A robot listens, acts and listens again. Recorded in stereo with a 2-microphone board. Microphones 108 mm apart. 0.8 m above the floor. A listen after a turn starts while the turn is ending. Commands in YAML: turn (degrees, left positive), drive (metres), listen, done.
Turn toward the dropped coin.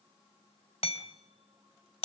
listen: true
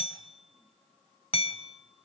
listen: true
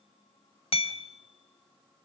done: "I can't make out a dropped coin, only hammering."